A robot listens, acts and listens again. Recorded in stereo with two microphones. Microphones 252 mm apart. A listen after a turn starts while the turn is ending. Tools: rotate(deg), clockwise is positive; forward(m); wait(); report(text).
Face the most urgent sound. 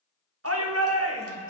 rotate(65)
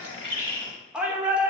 report("Found it: a shout, straight ahead.")